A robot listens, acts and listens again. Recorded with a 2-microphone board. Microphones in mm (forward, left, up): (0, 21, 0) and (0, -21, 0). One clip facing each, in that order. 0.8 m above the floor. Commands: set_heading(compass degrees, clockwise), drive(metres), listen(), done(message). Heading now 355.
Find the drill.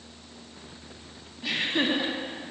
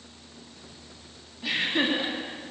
listen()
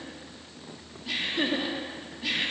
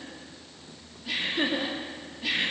listen()
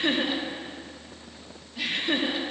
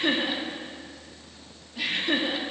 done("I can't make out a drill, only laughter.")